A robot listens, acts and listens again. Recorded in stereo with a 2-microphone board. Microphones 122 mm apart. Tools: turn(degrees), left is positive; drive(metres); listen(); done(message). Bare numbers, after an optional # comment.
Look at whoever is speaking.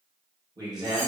# The man speaking: about 30° right or 150° right.
turn(-30)
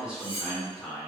# So it is at 10° right.
turn(-10)
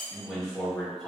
done("Facing the man speaking, 1 to 2 m away.")